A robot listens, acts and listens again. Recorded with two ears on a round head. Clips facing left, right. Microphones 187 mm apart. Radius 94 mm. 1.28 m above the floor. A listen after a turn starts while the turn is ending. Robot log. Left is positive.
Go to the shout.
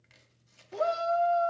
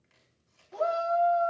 note: The shout: about 35° left or 145° left.
cmd yaw +35
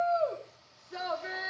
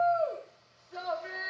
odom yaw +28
note: So it is at 120° left.
cmd yaw +120
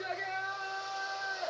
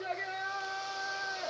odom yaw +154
note: The shout is now 35° right.
cmd yaw -35
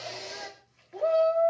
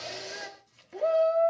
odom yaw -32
cmd fwd 1.0
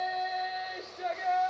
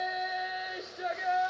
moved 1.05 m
note: The shout is now 10° right.
cmd yaw -10
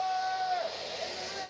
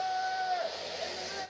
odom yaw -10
cmd fwd 1.0
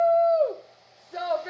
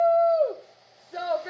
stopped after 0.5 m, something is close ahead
end: I am next to the shout.